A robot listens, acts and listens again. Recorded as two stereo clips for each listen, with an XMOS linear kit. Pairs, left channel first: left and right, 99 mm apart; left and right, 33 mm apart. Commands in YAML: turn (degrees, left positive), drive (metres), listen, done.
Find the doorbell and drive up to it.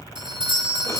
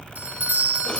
turn: -60
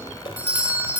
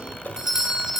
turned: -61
turn: -20
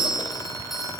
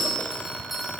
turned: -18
drive: 1.0
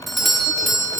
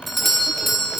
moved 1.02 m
drive: 1.0
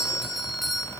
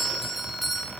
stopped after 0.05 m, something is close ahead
done: "Arrived at the doorbell, straight ahead."